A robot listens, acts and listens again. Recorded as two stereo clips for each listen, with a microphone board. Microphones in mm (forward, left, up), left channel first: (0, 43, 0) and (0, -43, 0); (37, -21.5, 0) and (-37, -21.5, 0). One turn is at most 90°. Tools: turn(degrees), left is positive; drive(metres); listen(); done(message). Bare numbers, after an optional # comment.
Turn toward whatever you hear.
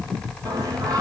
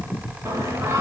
# The singing: 130° right.
turn(-90)
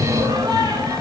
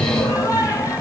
# The singing is now 40° right.
turn(-40)
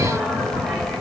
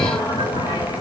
done("Found it: singing, straight ahead, 2 to 4 m away.")